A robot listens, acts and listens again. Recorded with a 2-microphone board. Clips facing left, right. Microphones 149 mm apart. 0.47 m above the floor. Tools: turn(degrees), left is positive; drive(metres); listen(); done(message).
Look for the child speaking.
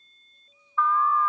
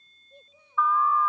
turn(degrees=-65)
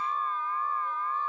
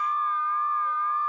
listen()
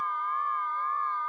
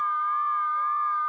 listen()
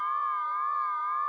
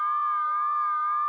done("I heard a child speaking, but can't make it out now. It was about straight ahead or 50° right.")